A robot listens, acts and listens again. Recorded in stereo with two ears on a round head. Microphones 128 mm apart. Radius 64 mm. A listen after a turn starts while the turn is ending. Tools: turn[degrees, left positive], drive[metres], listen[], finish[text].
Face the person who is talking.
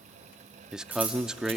Action: turn[-30]
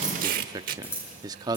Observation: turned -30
Thought: So it is at 145° right.
Action: turn[-145]
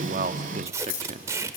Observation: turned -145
Thought: The man speaking is now 55° right.
Action: turn[-55]
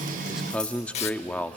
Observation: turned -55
Thought: The man speaking is now 10° left.
Action: turn[10]
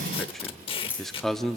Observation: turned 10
Action: finish[Found it: a man speaking, straight ahead.]